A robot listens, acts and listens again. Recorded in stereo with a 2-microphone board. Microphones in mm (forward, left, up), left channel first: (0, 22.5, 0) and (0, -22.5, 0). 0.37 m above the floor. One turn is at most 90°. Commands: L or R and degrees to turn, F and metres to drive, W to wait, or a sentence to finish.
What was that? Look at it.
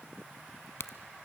L70
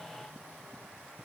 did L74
W
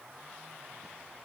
I heard a crack, but can't make it out now. It was about 5° right or 35° left.